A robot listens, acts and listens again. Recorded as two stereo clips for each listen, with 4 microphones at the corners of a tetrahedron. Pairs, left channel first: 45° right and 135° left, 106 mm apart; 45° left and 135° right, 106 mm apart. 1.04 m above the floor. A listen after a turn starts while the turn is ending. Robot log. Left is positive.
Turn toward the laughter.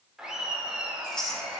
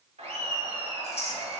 note: The laughter: 140° right.
cmd yaw -140
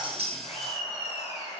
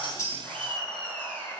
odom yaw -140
note: The laughter is now 35° right.
cmd yaw -35
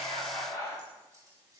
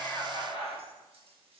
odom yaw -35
note: The laughter is now 15° left.
cmd yaw +15
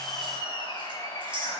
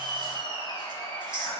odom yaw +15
end: Found it: laughter, straight ahead.